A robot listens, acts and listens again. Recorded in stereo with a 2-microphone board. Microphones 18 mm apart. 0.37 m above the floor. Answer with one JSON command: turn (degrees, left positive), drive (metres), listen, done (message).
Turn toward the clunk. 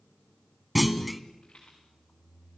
{"turn": 30}
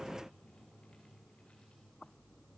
{"listen": true}
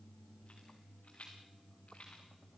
{"done": "I heard a clunk, but can't make it out now. It was about 30° right or 150° left."}